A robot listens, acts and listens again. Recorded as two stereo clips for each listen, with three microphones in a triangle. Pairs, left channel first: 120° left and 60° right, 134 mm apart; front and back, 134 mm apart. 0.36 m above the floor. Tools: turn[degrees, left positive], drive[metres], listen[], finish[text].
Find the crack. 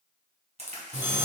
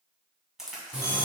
Thought: The crack: 95° right.
Action: turn[-95]
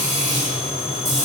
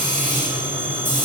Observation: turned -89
Action: finish[Facing where the crack came from. I can't hear it now.]